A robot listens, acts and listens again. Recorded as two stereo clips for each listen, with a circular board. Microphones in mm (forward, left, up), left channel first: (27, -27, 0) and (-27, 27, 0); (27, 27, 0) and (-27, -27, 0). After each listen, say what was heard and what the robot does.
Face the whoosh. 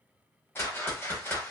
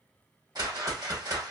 The whoosh: 105° right. Turn 105° right.
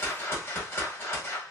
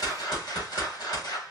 The whoosh is now 15° left. Turn 15° left.
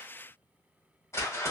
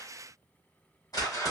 Facing the whoosh, 1 to 2 m away.